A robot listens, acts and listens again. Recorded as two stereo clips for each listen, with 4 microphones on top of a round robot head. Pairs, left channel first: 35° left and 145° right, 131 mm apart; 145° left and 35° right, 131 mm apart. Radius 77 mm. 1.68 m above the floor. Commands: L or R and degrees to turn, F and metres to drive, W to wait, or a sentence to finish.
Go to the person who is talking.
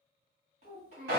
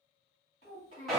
L180
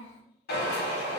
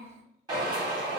R25
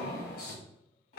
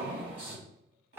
R10
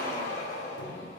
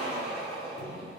W
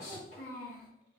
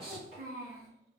F1.0
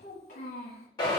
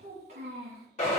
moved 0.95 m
F1.0
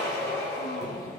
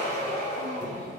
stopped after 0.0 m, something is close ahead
W
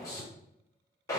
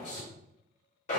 W
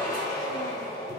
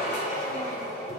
Facing where the child speaking came from. I can't hear it now. I did not reach it.